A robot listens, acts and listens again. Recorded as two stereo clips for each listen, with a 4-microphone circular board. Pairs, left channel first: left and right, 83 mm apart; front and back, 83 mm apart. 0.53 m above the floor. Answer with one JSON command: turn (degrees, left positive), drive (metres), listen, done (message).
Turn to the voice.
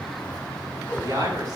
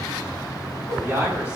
{"turn": -120}
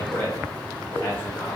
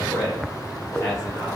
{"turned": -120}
{"turn": 25}
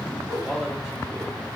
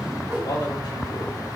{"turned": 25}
{"turn": -10}
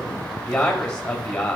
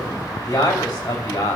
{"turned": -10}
{"turn": 15}
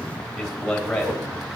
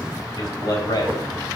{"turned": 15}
{"done": "Found it: a man speaking, straight ahead, 2 to 4 m away."}